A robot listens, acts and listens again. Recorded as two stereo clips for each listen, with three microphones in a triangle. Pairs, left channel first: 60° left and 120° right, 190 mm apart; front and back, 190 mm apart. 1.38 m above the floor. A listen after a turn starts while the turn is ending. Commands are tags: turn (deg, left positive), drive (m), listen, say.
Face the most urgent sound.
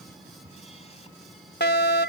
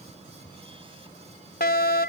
<turn deg="35"/>
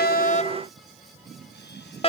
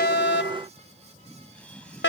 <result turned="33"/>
<say>Found it: a fire alarm, straight ahead.</say>